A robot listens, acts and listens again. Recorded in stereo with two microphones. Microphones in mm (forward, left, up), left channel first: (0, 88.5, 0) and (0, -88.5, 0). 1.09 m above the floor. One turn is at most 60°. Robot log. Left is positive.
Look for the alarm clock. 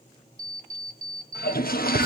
note: The alarm clock: about 50° right or 130° right.
cmd yaw -50
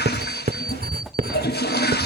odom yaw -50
cmd idle
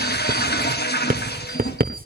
cmd idle
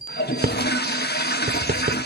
end: Found it: an alarm clock, straight ahead.